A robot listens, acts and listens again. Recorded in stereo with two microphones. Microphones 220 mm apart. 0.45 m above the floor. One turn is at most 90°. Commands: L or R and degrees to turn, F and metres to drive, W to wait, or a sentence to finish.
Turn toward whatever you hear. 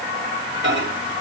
R60
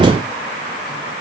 W
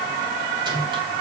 W
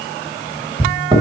R25
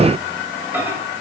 R10
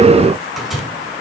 Found it: a microwave, straight ahead.